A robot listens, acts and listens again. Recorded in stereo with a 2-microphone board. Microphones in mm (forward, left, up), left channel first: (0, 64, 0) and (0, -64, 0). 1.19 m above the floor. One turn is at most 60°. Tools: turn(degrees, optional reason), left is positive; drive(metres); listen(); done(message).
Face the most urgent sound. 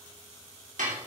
listen()
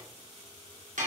listen()
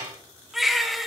turn(degrees=30)
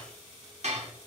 listen()
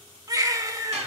turn(degrees=-30, reason="So it is at 30° right.")
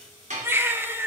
turn(degrees=-20, reason="The baby crying is now 20° right.")
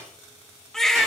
done("Facing the baby crying, 1 to 2 m away.")